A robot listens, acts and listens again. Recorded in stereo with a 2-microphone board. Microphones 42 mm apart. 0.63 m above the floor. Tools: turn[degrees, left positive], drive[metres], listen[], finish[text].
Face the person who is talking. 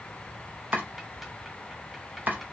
Action: listen[]
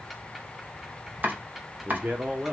Thought: The man speaking: about 30° right or 150° right.
Action: turn[-30]
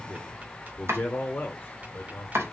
Thought: So it is at 40° left.
Action: turn[40]
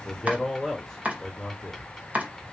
Action: finish[Facing the man speaking, 1 to 2 m away.]